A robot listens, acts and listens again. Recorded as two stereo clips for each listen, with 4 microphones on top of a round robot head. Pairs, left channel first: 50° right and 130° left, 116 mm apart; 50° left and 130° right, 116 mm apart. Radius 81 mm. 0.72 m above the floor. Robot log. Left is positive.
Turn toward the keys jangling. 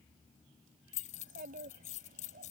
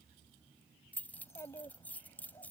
note: The keys jangling: 25° right.
cmd yaw -25
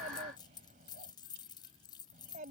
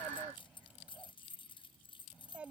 end: Facing the keys jangling.